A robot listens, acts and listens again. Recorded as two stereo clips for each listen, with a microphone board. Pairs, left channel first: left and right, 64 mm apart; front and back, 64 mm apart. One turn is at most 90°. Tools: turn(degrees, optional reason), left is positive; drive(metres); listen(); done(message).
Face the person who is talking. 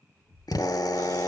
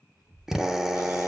turn(degrees=-90, reason="The child speaking: 160° right.")
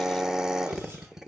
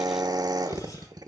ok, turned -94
turn(degrees=-70, reason="Nothing new. It was at 70° right.")
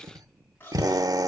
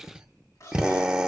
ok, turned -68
done("Found it: a child speaking, straight ahead, over 4 m away.")